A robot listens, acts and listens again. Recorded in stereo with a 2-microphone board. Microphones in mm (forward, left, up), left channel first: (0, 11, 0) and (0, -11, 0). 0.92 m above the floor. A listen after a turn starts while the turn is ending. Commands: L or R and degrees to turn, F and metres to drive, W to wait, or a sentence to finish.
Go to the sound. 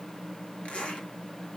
L55
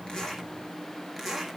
F1.0
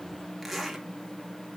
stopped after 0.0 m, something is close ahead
Something is in my way. I am facing the zipper but have not reached it.